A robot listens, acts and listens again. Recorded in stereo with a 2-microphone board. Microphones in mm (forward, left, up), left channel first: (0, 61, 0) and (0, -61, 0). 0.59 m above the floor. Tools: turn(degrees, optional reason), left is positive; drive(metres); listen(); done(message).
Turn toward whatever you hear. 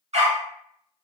turn(degrees=-65, reason="The dog barking: about 65° right or 115° right.")
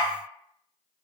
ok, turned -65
done("Found it: a dog barking, straight ahead, under 1 m away.")